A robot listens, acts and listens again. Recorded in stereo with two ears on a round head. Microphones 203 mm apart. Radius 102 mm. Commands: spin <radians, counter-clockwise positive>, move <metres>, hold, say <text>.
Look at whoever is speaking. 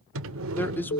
spin 0.52
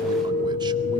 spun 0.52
hold
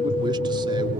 hold
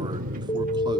say I heard a man speaking, but can't make it out now. It was about 20° right or 140° left.